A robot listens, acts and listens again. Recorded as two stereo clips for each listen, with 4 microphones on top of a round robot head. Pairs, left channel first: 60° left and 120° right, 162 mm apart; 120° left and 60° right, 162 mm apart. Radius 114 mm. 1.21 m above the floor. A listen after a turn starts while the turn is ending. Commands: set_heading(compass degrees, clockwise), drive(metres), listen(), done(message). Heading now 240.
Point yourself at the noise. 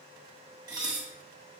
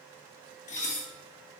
set_heading(70)
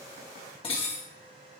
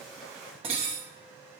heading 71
done("Facing the dishes clattering, 1 to 2 m away.")